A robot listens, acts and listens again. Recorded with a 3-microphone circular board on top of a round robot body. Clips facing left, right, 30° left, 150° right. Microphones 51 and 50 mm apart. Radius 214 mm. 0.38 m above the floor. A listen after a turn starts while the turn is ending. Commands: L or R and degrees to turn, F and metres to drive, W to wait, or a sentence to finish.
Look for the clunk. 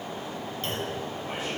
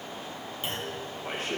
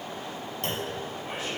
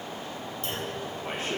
R10
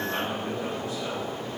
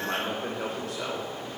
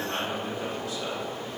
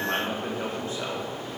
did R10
I heard a clunk from this way, but can't make it out now.